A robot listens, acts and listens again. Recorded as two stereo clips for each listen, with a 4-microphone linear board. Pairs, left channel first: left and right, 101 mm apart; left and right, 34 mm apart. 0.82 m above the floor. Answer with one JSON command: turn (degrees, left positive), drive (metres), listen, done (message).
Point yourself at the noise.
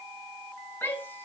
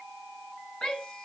{"turn": 20}
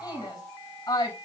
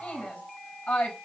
{"turn": 140}
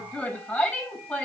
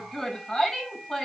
{"turn": 15}
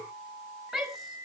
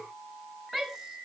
{"done": "Found it: a shout, straight ahead."}